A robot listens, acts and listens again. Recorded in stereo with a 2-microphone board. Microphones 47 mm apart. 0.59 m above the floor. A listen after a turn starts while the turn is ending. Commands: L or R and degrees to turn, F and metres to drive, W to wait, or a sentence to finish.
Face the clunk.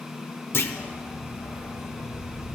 L55
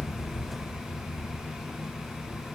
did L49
W
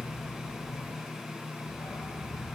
I heard a clunk, but can't make it out now. It was about 5° left or 80° left.